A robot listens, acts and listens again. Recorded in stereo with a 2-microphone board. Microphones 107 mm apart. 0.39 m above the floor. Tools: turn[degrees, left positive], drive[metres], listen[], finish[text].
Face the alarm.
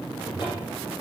Action: listen[]
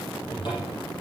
Action: listen[]
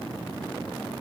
Action: finish[I can't make out an alarm, only a cupboard door.]